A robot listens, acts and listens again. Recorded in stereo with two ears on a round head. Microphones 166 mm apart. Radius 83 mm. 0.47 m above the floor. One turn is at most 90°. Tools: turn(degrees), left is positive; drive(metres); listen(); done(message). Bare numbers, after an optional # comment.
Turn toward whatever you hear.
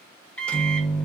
turn(30)
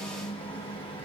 # So it is at 145° left.
turn(90)
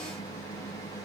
# The microwave is now 25° left.
turn(25)
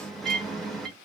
done("Found it: a microwave, straight ahead, under 1 m away.")